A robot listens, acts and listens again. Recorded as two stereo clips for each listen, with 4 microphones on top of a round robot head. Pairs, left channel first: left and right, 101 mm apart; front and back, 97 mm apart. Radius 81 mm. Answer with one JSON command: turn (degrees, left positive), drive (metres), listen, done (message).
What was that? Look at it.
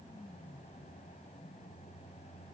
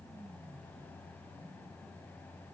{"listen": true}
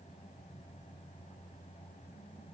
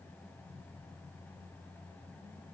{"listen": true}
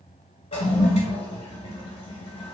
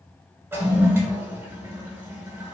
{"turn": 110}
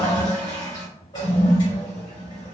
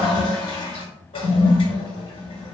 {"turn": 30}
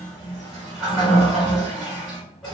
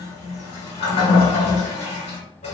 {"done": "Facing the toilet flushing."}